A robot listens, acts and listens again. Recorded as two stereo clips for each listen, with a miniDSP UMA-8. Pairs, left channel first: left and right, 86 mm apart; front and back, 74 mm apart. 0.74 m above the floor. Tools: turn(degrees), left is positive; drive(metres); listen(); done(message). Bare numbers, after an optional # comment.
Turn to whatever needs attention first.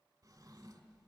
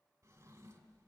listen()
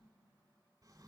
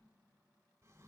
listen()
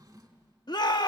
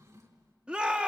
# The shout: 110° left.
turn(110)
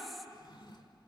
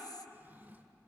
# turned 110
listen()
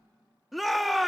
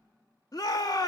done("Found it: a shout, straight ahead.")